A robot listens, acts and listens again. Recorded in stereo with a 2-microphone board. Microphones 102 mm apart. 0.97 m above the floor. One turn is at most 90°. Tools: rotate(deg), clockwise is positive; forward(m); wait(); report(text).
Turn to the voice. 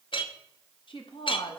rotate(-55)
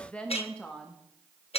rotate(-15)
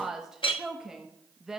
report("Found it: a woman speaking, straight ahead, under 1 m away.")